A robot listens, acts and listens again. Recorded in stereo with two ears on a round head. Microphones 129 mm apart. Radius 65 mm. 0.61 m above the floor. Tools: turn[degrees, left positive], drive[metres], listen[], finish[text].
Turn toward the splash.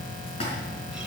Thought: The splash: about 45° left or 135° left.
Action: turn[45]
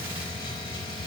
Action: listen[]
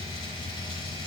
Action: finish[I heard a splash, but can't make it out now. It was about straight ahead or 90° left.]